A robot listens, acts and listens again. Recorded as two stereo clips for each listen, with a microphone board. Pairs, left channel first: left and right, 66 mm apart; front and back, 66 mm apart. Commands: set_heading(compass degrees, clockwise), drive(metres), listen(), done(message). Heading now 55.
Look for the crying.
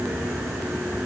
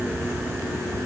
listen()
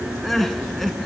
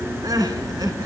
set_heading(240)
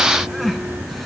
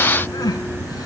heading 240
done("Facing the crying, 1 to 2 m away.")